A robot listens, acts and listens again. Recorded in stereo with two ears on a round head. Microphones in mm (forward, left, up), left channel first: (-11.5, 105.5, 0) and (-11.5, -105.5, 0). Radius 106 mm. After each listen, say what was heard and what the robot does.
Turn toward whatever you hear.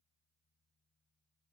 Keep listening.
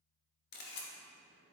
The camera shutter: about 45° left or 135° left. Turn 45° left.
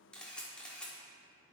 Facing the camera shutter, 1 to 2 m away.